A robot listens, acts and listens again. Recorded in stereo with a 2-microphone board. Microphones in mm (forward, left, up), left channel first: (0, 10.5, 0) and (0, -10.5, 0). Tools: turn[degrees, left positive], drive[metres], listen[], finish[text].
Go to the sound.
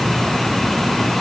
Action: listen[]
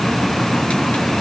Action: listen[]
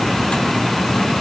Action: finish[I can't make out anything to turn to.]